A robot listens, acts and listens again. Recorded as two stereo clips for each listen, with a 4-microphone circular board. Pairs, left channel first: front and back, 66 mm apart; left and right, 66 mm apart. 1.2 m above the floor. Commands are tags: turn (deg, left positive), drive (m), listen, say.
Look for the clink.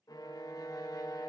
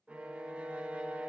<listen/>
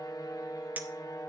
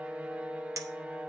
<turn deg="-115"/>
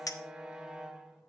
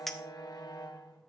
<say>Found it: a clink, straight ahead, under 1 m away.</say>